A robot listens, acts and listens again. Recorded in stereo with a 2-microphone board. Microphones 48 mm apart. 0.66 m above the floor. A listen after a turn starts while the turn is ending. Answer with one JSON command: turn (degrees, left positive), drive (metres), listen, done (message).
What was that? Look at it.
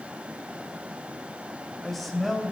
{"turn": 30}
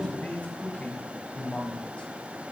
{"turn": 155}
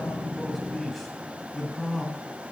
{"done": "Found it: a man speaking, straight ahead, over 4 m away."}